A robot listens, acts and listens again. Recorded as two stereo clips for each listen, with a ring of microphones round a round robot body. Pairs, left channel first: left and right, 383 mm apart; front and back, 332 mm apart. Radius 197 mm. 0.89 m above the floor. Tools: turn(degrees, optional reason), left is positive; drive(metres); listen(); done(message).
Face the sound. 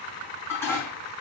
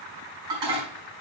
turn(degrees=175, reason="The dishes clattering: 175° left.")
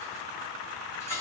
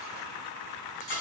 done("Facing the dishes clattering, over 4 m away.")